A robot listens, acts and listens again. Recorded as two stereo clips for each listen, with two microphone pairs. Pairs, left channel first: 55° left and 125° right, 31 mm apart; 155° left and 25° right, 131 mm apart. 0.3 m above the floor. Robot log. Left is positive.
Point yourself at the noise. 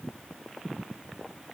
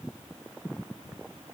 cmd idle
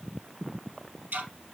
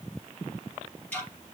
note: The ticking: 125° right.
cmd yaw -125
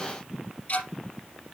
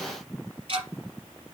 note: The ticking is now 20° left.
cmd yaw +20
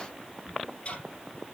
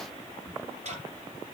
note: The ticking is now 10° left.
cmd yaw +10
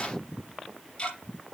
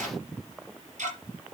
end: Found it: ticking, straight ahead.